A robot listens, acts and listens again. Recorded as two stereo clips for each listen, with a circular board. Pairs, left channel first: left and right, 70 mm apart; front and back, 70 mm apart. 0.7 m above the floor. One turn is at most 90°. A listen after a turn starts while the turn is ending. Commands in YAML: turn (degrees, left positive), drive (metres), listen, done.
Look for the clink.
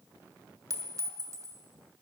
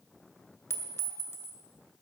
turn: -55
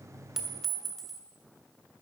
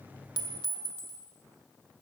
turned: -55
done: "Found it: a clink, straight ahead, 1 to 2 m away."